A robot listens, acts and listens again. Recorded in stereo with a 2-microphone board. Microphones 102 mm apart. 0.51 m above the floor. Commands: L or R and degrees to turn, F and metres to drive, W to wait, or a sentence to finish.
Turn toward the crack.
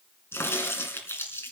L25
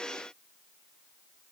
W
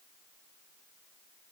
I heard a crack, but can't make it out now. It was about straight ahead or 130° left.